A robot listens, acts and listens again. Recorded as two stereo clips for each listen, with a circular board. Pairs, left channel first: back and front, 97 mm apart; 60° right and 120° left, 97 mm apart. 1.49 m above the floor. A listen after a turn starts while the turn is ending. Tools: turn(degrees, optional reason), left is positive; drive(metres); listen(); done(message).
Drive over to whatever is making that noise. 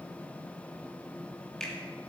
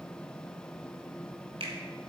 turn(degrees=95, reason="The finger snap: 95° left.")
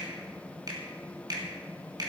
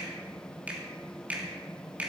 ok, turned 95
turn(degrees=45, reason="The finger snap is now 45° left.")
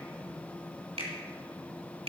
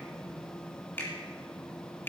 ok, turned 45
turn(degrees=10, reason="The finger snap is now 10° left.")
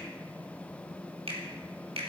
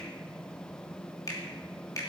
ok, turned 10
drive(metres=1.0)
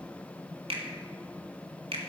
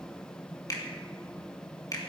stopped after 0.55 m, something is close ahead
turn(degrees=-10, reason="The finger snap is now 10° right.")
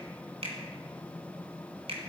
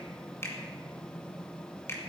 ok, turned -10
done("Something is in my way. I am facing the finger snap but have not reached it.")